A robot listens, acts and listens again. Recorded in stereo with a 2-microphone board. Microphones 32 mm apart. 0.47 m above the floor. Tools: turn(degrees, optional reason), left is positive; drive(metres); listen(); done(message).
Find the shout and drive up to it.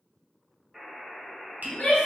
turn(degrees=40, reason="The shout: about 40° left or 140° left.")
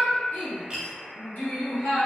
turn(degrees=100, reason="So it is at 100° left.")
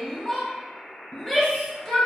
turn(degrees=15, reason="The shout is now 15° left.")
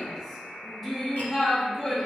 drive(metres=1.0)
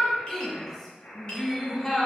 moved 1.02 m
turn(degrees=15, reason="The shout is now 15° left.")
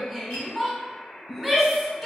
drive(metres=1.0)
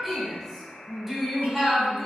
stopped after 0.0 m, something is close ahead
done("I am next to the shout.")